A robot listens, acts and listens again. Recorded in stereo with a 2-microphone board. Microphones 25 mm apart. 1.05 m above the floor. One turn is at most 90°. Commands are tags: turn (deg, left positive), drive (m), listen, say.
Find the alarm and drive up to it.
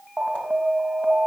<turn deg="-55"/>
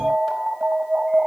<turn deg="-55"/>
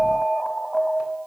<drive m="1.0"/>
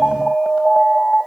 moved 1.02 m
<drive m="1.0"/>
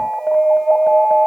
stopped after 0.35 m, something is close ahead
<say>I am next to the alarm.</say>